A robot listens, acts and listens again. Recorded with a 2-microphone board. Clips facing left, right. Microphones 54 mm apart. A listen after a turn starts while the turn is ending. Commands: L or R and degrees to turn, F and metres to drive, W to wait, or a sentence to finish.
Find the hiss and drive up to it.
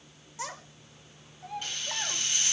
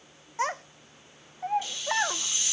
L50
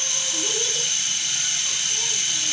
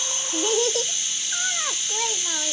L70
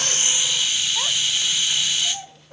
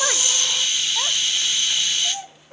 F1.0
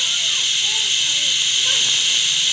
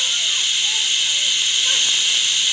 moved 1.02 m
F1.0
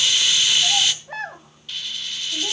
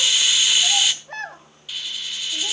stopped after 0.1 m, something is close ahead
I am next to the hiss.